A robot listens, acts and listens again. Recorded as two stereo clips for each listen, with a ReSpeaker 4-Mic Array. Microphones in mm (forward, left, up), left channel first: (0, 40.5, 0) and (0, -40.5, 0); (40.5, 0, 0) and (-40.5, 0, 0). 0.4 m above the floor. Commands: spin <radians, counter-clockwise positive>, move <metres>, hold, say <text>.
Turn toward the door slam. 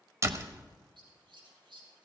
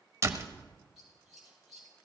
spin -2.36
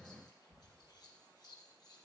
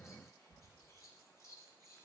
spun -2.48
say Facing where the door slam came from. I can't hear it now.